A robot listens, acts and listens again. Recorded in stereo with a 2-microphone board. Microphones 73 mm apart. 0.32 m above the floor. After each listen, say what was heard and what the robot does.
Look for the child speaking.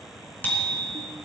Keep listening.
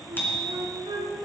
Keep listening.
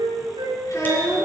The child speaking: about 45° left or 135° left. Turn 45° left.
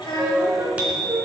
So it is at 105° left. Turn 105° left.
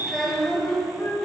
The child speaking is now 10° left. Turn 10° left.
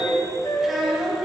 Found it: a child speaking, straight ahead.